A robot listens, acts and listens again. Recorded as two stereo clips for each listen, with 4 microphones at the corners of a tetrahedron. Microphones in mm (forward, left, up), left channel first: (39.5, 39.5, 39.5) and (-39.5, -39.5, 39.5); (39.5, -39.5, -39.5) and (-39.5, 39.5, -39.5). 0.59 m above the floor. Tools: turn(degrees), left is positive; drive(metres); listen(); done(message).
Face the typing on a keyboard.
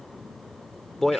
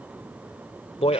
listen()
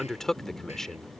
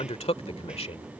listen()
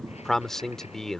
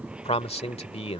done("I can't make out typing on a keyboard to turn to.")